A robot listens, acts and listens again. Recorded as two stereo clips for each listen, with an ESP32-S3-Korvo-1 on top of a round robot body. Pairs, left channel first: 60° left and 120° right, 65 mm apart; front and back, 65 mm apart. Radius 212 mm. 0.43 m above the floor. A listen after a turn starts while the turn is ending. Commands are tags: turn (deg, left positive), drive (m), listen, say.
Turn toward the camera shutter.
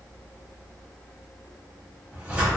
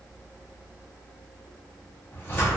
<listen/>
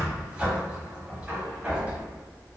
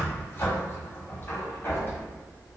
<listen/>
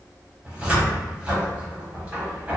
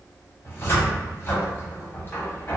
<say>I can't make out a camera shutter to turn to.</say>